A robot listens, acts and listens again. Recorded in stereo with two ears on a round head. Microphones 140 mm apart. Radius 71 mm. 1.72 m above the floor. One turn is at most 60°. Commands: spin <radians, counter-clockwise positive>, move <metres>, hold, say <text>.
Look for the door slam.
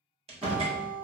spin -0.70
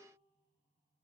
hold
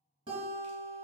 say I heard a door slam, but can't make it out now. It was about straight ahead or 100° right.